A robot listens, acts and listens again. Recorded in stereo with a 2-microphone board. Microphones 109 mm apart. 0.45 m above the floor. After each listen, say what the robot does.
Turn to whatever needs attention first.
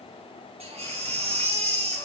Turn 90° right.
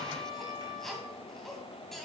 Keep listening.
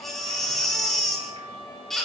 Facing the baby crying, 2 to 4 m away.